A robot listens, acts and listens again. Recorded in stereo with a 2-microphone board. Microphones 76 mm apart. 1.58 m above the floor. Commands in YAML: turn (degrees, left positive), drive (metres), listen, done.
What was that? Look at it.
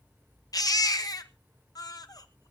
turn: 55
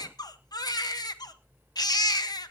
turn: 65
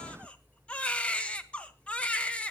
turn: 15
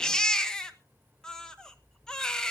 turn: 10
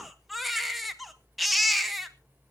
done: "Facing the baby crying, 1 to 2 m away."